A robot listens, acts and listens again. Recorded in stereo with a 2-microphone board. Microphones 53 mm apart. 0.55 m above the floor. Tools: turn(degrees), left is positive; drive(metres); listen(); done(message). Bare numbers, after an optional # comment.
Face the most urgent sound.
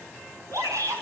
# The shout: about 75° right or 105° right.
turn(-75)
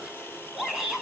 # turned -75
done("Found it: a shout, straight ahead.")